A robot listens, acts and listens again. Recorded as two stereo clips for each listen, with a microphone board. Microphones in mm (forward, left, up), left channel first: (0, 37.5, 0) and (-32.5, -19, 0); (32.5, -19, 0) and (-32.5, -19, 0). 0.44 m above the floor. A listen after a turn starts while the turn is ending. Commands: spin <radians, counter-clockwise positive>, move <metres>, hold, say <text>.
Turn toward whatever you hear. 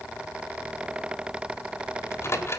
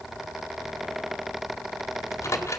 spin 0.44
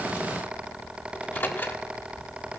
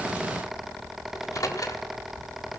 spin 0.17
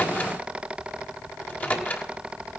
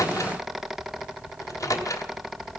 say Facing the microwave, 1 to 2 m away.